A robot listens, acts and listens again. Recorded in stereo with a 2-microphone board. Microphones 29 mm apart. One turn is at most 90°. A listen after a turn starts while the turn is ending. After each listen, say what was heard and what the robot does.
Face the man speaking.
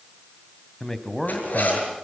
Turn 30° left.
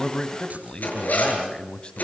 So it is at 135° left. Turn 90° left.
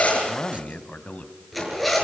The man speaking is now 65° left. Turn 65° left.
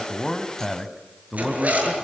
Found it: a man speaking, straight ahead, 2 to 4 m away.